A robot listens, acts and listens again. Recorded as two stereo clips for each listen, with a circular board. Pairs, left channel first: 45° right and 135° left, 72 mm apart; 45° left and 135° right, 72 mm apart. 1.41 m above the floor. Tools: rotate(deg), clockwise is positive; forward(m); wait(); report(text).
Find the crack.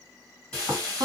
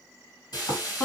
wait()
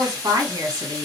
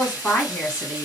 wait()
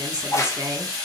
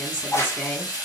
report("Found it: a crack, straight ahead, under 1 m away.")